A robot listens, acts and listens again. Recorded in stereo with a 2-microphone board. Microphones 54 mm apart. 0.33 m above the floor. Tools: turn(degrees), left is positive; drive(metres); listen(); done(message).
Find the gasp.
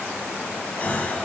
turn(degrees=25)
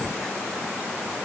listen()
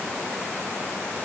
done("I heard a gasp, but can't make it out now. It was about straight ahead or 130° left.")